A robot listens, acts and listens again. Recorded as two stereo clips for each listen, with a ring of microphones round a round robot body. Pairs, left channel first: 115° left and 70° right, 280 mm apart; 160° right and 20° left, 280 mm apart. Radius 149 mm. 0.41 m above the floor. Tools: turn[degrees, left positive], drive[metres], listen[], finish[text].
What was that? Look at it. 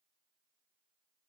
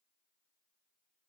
Action: listen[]
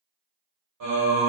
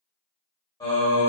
Thought: The singing: 75° right.
Action: turn[-75]
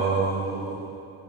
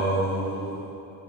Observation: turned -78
Thought: The singing is now 35° left.
Action: turn[35]
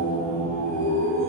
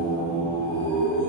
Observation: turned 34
Thought: The singing is now 20° left.
Action: turn[20]
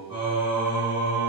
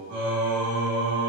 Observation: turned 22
Action: finish[Found it: singing, straight ahead.]